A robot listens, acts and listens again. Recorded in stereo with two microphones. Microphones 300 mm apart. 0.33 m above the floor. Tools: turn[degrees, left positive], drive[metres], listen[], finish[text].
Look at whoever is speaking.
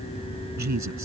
Thought: The man speaking: about 70° right or 110° right.
Action: turn[-70]
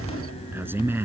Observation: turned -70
Thought: So it is at 10° right.
Action: turn[-10]
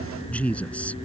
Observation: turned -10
Action: finish[Found it: a man speaking, straight ahead.]